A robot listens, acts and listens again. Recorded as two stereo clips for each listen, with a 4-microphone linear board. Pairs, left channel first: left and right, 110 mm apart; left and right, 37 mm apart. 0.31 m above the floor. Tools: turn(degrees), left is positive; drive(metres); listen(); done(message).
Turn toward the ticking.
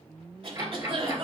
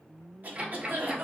turn(degrees=-30)
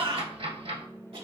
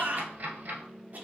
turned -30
turn(degrees=-120)
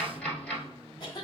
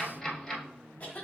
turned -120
turn(degrees=15)
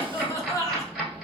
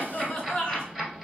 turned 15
done("Found it: ticking, straight ahead.")